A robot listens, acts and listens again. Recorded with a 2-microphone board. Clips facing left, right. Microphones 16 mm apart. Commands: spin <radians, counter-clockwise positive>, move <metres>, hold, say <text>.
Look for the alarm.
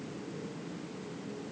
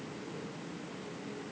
hold
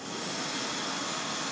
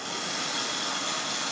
hold
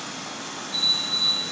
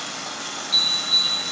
spin -0.96
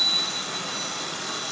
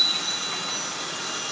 spin -0.52
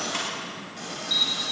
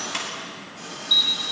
spin -0.17
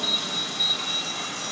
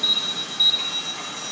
say Facing the alarm, 2 to 4 m away.